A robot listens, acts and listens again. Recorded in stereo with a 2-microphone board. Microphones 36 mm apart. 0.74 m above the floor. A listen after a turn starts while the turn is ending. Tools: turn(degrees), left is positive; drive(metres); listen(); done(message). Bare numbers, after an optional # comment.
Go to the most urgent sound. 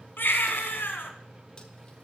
# The baby crying: about 70° left or 110° left.
turn(70)
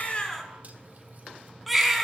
drive(1.0)
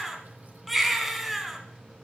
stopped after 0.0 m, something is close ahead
done("Blocked. The baby crying is further on, straight ahead.")